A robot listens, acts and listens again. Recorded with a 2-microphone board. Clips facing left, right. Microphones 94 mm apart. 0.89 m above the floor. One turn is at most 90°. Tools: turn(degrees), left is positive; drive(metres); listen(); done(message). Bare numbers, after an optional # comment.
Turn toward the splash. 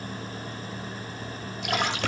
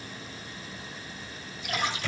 # The splash: about 70° left or 110° left.
turn(70)
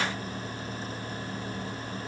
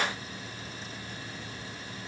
listen()
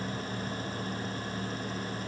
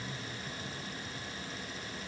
done("I heard a splash, but can't make it out now. It was about straight ahead or 40° left.")